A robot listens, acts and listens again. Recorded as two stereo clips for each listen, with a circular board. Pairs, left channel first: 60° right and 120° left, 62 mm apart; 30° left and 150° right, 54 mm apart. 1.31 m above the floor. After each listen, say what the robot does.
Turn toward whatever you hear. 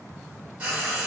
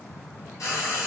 Turn 55° left.
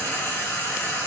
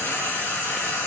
Turn 10° right.
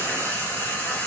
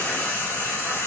Facing the frying, 1 to 2 m away.